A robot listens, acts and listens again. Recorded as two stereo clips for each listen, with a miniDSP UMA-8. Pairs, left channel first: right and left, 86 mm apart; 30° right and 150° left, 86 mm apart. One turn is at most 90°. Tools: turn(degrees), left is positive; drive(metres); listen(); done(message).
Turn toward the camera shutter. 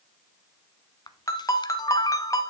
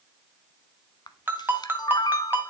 turn(degrees=-60)
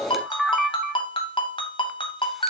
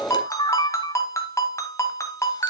done("Facing the camera shutter.")